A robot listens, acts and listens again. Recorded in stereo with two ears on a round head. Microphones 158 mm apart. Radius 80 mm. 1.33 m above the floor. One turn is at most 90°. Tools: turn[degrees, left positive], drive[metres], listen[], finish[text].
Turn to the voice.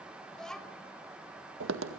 Action: turn[30]
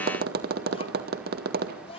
Thought: So it is at 145° left.
Action: turn[90]
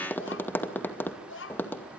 Thought: The child speaking is now 75° left.
Action: turn[75]
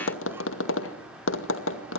Action: listen[]
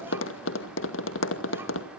Action: listen[]
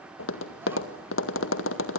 Action: finish[Facing where the child speaking came from. I can't hear it now.]